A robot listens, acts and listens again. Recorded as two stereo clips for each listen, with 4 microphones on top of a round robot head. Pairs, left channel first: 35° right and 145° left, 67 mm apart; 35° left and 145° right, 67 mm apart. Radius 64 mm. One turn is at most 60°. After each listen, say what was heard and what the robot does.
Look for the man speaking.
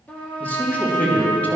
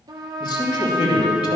The man speaking: 35° left. Turn 35° left.
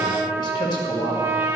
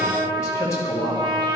The man speaking is now 10° right. Turn 10° right.
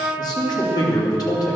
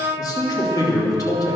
Facing the man speaking, 2 to 4 m away.